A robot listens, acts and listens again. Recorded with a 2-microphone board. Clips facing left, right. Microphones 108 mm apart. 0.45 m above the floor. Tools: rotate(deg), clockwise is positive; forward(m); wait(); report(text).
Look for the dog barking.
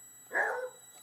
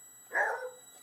rotate(-30)
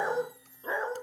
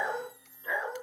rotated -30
rotate(-145)
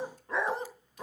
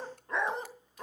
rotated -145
report("Facing the dog barking, 1 to 2 m away.")